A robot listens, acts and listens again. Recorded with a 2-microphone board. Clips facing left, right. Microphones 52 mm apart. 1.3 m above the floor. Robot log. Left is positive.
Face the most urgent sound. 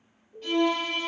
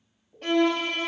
cmd yaw -30
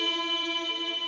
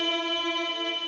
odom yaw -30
cmd idle
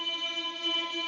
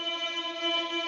cmd idle
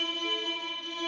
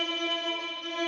end: I heard an alarm, but can't make it out now. It was about 25° left or 145° right.